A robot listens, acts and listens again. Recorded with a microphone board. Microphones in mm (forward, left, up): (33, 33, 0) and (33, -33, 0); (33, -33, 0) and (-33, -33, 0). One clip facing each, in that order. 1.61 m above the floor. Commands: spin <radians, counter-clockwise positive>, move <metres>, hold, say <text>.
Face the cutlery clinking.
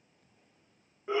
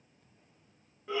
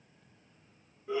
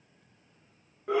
hold
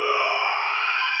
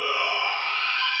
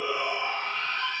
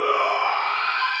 hold
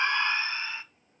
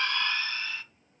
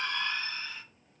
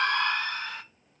say I can't make out cutlery clinking, only a shout.